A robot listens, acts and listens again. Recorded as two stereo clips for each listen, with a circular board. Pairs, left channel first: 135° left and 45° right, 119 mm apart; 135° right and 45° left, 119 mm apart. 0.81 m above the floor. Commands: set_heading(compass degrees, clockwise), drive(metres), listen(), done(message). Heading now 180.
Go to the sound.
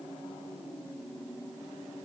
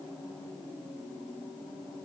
listen()
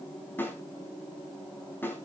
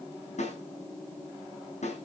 set_heading(330)
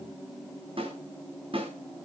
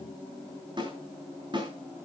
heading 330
drive(1.0)
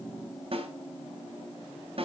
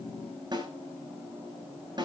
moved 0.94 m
drive(1.0)
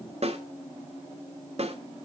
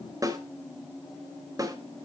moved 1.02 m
set_heading(345)
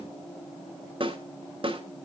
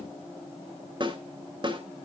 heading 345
drive(1.0)
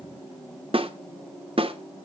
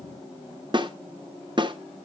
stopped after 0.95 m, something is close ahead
done("Arrived at the snare drum, straight ahead.")